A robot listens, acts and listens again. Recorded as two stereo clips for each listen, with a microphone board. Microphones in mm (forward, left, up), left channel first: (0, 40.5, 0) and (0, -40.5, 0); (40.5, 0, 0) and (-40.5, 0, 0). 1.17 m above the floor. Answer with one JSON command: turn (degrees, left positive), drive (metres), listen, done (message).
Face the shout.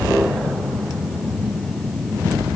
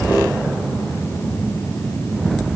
{"listen": true}
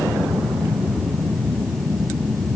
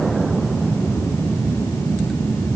{"listen": true}
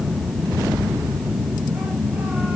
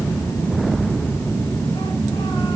{"done": "I can't make out a shout to turn to."}